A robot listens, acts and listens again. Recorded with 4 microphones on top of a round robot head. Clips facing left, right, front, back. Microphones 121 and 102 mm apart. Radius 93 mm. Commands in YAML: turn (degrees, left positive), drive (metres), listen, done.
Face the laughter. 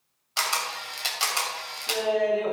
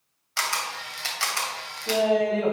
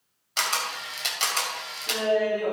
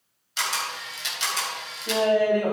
turn: -125
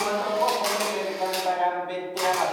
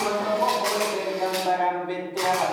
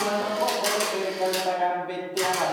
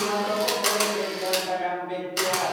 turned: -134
turn: 10
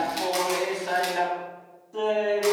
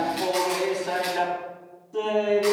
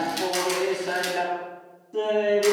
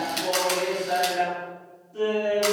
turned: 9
done: "Facing the laughter, over 4 m away."